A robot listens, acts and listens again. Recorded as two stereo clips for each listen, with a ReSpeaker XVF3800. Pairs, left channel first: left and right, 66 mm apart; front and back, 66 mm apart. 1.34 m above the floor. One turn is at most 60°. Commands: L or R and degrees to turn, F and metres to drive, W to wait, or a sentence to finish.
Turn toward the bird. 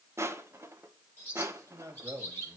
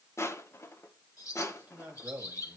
L30
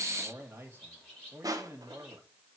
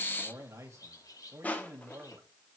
L10
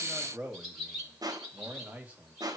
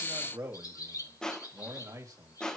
Facing the bird, over 4 m away.